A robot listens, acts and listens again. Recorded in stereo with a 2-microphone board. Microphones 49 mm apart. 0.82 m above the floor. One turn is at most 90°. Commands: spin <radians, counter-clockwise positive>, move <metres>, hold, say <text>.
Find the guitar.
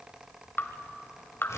hold
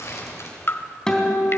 spin 0.52
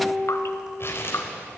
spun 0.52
spin -0.26
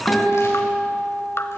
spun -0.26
say Found it: a guitar, straight ahead.